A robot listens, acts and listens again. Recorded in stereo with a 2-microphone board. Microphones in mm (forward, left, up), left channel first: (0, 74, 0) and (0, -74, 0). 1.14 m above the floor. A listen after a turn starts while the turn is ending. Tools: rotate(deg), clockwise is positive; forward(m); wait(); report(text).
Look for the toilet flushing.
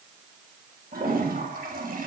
rotate(90)
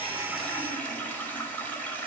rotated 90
rotate(-10)
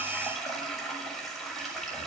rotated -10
report("Facing the toilet flushing, over 4 m away.")